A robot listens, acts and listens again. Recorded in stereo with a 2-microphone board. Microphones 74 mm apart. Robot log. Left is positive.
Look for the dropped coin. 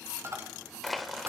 note: The dropped coin: about 35° right or 145° right.
cmd yaw -35
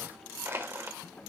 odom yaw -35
cmd idle
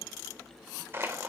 end: I heard a dropped coin, but can't make it out now. It was about straight ahead or 110° right.